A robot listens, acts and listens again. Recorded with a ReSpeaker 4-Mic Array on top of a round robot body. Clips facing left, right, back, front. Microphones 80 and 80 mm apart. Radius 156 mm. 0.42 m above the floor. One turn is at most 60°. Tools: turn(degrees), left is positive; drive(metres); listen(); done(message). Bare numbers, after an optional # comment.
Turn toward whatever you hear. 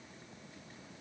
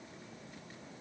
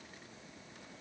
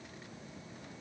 listen()
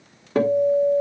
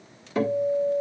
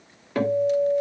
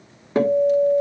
# The guitar: 60° left.
turn(60)
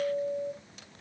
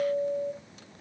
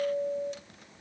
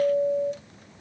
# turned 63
done("Found it: a guitar, straight ahead.")